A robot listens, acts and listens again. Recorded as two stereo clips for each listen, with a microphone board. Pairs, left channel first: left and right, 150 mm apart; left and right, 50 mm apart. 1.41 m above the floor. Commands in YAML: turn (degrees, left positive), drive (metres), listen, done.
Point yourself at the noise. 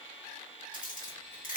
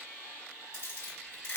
turn: 55
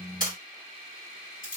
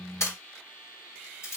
turn: 65
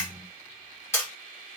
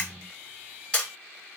turn: 15
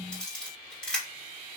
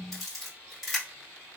done: "Found it: a camera shutter, straight ahead, 1 to 2 m away."